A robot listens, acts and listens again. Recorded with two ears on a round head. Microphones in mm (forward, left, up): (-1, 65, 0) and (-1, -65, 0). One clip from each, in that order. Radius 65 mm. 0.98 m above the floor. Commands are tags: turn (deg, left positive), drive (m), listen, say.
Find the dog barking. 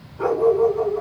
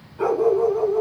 <turn deg="-55"/>
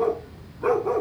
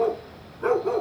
<turn deg="-70"/>
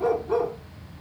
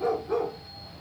<say>Found it: a dog barking, straight ahead, 1 to 2 m away.</say>